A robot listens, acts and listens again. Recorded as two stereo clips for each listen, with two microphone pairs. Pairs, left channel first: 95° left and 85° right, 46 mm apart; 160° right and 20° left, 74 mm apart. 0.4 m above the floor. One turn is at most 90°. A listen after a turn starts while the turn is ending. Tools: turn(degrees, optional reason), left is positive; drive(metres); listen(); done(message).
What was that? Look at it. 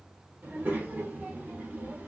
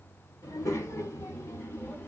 turn(degrees=-90, reason="The child speaking: 110° right.")
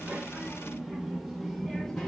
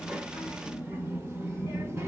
turn(degrees=20, reason="The child speaking is now 20° left.")
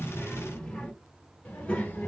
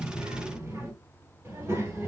turn(degrees=45, reason="The child speaking is now 45° left.")
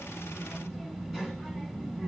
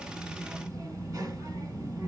turn(degrees=-15, reason="The child speaking is now 15° right.")
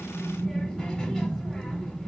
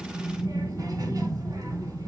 done("Found it: a child speaking, straight ahead, 1 to 2 m away.")